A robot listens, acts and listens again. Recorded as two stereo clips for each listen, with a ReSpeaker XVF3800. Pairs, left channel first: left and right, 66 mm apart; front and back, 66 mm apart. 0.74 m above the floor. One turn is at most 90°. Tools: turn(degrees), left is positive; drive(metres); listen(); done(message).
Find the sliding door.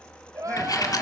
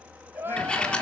turn(degrees=75)
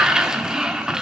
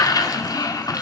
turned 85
turn(degrees=-10)
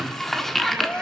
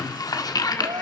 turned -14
done("Found it: a sliding door, straight ahead.")